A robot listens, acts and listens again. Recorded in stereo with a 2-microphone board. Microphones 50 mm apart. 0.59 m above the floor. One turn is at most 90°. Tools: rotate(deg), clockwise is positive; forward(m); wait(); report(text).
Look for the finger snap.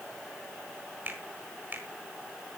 rotate(35)
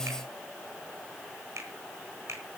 rotate(90)
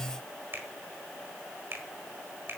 rotate(50)
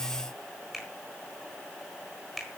report("Found it: a finger snap, straight ahead, over 4 m away.")